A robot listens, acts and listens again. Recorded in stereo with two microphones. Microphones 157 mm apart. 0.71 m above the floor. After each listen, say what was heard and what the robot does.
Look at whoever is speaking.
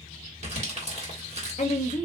The woman speaking: about 50° left or 130° left. Turn 50° left.
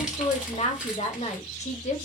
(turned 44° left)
So it is at 65° left. Turn 65° left.
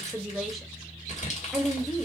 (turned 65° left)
Found it: a woman speaking, straight ahead.